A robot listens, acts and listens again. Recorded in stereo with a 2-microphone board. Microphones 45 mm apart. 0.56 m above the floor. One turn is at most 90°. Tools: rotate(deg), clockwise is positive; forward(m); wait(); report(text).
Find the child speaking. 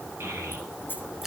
rotate(65)
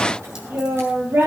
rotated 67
rotate(55)
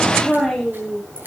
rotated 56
report("Found it: a child speaking, straight ahead.")